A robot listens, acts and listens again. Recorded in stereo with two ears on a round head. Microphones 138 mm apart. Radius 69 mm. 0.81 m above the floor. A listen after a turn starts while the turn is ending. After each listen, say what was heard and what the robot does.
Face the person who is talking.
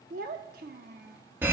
The child speaking: about 60° right or 120° right. Turn 60° right.
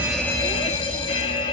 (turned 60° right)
Keep listening.
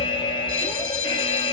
Keep listening.
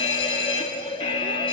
I heard a child speaking, but can't make it out now. It was about straight ahead or 60° right.